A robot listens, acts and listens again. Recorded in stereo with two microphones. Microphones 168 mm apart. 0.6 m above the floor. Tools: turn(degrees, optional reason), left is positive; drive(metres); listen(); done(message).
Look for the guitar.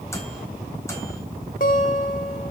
turn(degrees=55, reason="The guitar: about 55° left or 125° left.")
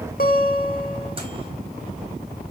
turn(degrees=65, reason="So it is at 65° left.")
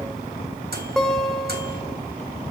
done("Found it: a guitar, straight ahead.")